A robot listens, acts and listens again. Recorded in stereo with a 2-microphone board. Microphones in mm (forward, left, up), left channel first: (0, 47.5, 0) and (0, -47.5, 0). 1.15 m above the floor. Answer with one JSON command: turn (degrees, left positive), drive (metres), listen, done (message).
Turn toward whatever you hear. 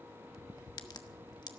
{"turn": 45}
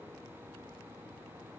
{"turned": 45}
{"listen": true}
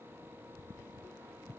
{"done": "I heard a crack, but can't make it out now. It was about straight ahead or 90° left."}